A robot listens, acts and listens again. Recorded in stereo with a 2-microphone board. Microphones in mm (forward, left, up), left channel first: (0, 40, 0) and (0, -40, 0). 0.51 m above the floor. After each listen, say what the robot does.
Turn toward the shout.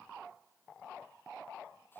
Keep listening.
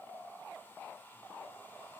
Keep listening.
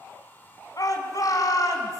Turn 50° left.
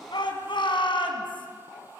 Turn 80° left.
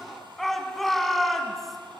Found it: a shout, straight ahead, over 4 m away.